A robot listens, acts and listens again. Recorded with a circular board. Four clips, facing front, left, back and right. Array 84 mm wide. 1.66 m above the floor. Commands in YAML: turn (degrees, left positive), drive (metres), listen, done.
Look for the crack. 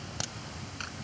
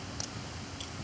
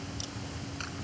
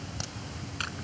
turn: -15
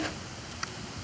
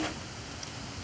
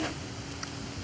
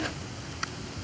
done: "Facing where the crack came from. I can't hear it now."